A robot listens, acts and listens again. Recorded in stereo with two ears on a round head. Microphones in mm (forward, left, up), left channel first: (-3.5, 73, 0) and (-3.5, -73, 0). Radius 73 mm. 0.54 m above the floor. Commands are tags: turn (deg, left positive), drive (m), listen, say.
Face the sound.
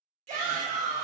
<turn deg="-45"/>
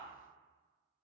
<listen/>
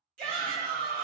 <turn deg="-70"/>
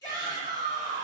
<turn deg="25"/>
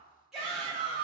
<say>Found it: a shout, straight ahead, 1 to 2 m away.</say>